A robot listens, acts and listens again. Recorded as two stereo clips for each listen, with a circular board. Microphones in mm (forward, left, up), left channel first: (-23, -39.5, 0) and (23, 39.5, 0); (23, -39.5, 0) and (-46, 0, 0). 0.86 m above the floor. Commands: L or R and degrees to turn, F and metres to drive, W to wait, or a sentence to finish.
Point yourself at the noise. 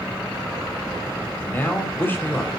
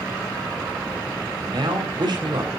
L175
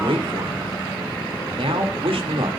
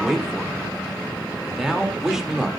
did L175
L65
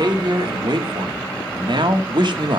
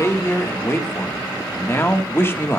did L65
L30
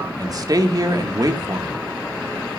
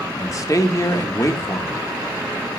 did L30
L15
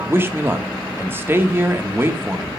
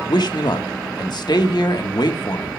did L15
Facing the man speaking, 1 to 2 m away.